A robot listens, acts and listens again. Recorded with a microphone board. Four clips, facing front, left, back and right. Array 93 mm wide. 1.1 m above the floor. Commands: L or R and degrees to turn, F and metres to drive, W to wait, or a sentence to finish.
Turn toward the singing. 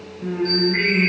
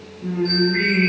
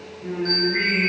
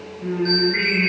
R45
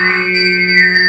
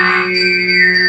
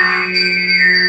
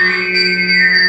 R20
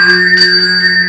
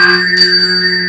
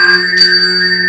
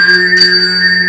R60
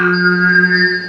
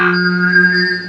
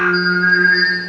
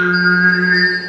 R40
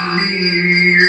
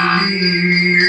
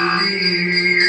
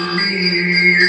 R10
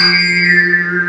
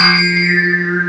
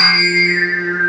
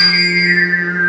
Facing the singing, 2 to 4 m away.